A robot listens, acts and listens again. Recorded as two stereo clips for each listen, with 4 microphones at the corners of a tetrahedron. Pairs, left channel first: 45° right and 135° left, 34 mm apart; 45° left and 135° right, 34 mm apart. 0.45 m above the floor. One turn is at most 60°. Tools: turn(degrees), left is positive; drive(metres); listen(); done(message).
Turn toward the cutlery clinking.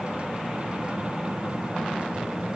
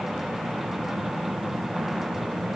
listen()
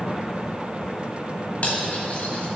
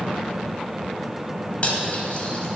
done("Found it: cutlery clinking, straight ahead, 1 to 2 m away.")